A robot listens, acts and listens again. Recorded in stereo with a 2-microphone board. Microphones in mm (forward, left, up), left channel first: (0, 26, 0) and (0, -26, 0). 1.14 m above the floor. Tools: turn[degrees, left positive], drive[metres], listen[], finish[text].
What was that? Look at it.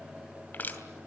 Thought: The crushing: about 35° left or 145° left.
Action: turn[35]
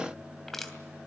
Action: finish[Facing the crushing.]